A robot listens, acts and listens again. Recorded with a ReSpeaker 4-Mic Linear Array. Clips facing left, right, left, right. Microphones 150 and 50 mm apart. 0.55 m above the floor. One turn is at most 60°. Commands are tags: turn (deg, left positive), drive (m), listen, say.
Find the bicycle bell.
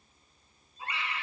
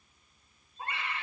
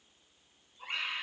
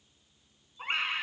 <listen/>
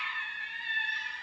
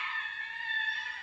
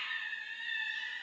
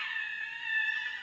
<listen/>
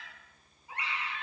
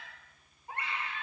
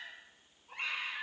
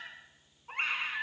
<say>I can't make out a bicycle bell to turn to.</say>